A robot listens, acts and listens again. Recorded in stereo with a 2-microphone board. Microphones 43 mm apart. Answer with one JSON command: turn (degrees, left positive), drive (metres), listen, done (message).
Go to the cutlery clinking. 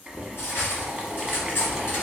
{"turn": 65}
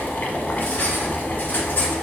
{"turn": 50}
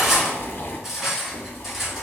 {"drive": 1.0}
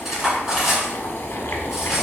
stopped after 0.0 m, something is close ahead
{"done": "Something is in my way. I am facing the cutlery clinking but have not reached it."}